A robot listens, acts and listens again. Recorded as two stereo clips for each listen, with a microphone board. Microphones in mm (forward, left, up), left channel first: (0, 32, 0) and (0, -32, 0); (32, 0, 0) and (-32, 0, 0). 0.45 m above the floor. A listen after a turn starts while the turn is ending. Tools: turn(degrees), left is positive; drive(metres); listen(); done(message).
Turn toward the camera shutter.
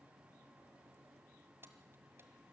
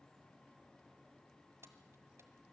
listen()
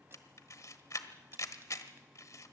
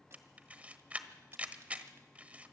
turn(degrees=115)
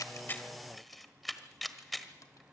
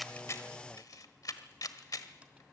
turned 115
done("Facing the camera shutter, 1 to 2 m away.")